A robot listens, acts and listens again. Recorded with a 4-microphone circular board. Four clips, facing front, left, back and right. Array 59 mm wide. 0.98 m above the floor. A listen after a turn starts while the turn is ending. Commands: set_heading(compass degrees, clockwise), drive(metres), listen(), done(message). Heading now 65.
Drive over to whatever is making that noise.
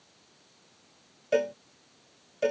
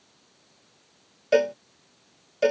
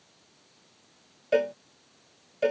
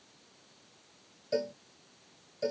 set_heading(320)
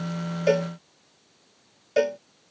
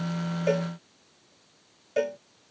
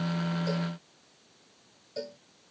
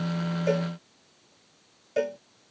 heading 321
drive(1.0)
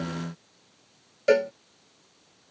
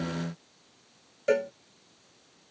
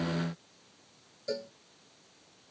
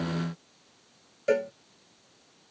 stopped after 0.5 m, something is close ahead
done("Blocked. The cowbell is further on, straight ahead.")